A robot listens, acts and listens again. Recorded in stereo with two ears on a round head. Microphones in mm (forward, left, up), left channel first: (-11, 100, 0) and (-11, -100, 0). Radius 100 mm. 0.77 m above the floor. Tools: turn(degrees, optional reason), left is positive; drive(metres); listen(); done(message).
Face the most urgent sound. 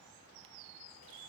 listen()
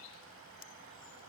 listen()
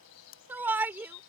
turn(degrees=-30)
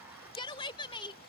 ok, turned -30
turn(degrees=25, reason="So it is at 25° left.")
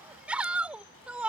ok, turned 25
done("Found it: a shout, straight ahead.")